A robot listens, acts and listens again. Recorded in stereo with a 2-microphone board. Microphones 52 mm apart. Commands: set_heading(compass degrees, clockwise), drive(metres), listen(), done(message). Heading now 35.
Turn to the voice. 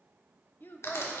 set_heading(350)
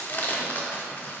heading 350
listen()
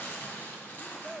done("Found it: a child speaking, straight ahead.")